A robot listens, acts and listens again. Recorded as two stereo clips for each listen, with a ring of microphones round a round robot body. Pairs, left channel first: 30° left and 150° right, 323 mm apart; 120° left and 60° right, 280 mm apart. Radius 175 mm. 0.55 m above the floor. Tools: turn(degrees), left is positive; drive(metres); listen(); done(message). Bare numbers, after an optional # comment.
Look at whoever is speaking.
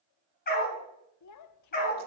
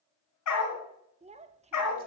done("Facing the child speaking, under 1 m away.")